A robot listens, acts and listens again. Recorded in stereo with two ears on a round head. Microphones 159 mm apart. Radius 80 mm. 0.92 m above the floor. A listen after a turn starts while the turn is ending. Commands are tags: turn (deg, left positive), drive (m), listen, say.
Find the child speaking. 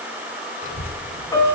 <turn deg="50"/>
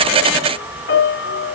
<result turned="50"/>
<turn deg="10"/>
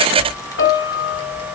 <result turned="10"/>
<turn deg="30"/>
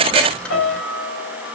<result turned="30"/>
<say>Found it: a child speaking, straight ahead.</say>